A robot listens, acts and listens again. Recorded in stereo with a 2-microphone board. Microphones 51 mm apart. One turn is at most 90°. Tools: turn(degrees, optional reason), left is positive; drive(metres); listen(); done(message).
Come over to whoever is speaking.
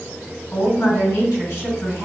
turn(degrees=60, reason="The woman speaking: about 60° left or 120° left.")
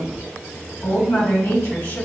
turn(degrees=65, reason="So it is at 65° left.")
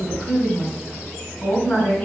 turn(degrees=30, reason="The woman speaking is now 30° left.")
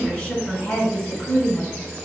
turn(degrees=25, reason="The woman speaking is now 25° left.")
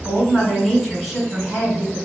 turn(degrees=10, reason="The woman speaking is now 10° left.")
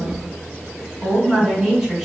drive(metres=1.0)
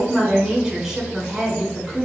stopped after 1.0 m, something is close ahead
done("I am next to the woman speaking.")